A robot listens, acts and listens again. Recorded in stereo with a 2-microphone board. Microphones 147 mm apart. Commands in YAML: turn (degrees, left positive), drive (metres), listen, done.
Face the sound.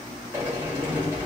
turn: -15
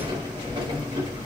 turn: -145
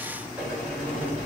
turn: -10
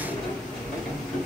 done: "Found it: a sliding door, straight ahead."